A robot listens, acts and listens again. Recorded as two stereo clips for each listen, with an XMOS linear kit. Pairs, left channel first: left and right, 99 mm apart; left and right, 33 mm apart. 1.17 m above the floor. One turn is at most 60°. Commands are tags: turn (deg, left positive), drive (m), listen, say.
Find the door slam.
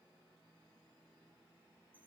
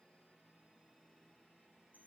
<listen/>
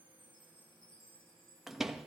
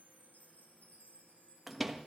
<turn deg="-30"/>
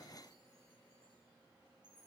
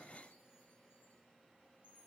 <listen/>
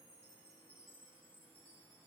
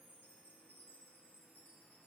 <say>I heard a door slam, but can't make it out now. It was about 25° left or 145° right.</say>